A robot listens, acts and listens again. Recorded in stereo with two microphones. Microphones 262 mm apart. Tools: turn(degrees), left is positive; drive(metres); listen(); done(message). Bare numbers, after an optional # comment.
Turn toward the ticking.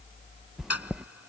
# The ticking: about 65° left or 115° left.
turn(65)
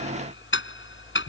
# So it is at 45° left.
turn(45)
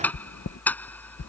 done("Found it: ticking, straight ahead.")